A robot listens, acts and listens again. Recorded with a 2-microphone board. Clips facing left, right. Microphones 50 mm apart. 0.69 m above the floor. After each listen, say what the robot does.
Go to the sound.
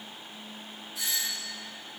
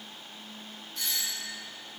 Turn 30° left.
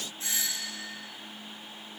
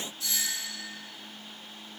Turn 145° left.
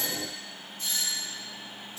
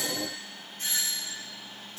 Turn 55° right.
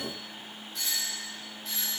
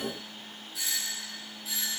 Drive 1.0 m forward.
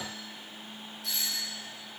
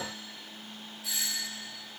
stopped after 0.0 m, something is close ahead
Blocked. The doorbell is further on, straight ahead.